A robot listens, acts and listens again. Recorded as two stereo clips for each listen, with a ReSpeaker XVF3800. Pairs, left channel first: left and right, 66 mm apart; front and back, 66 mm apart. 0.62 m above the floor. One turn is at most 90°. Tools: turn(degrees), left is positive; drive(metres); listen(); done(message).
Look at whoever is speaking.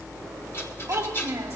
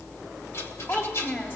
turn(degrees=-60)
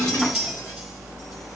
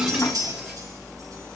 listen()
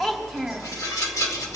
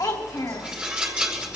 done("Found it: a child speaking, straight ahead.")